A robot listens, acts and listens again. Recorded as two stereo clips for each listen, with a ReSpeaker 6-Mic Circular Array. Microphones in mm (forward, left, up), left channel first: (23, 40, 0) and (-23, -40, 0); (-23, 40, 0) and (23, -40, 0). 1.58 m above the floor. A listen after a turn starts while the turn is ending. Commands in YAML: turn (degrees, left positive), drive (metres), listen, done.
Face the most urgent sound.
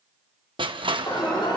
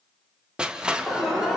turn: 30
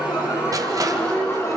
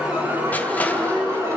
done: "Facing the alarm."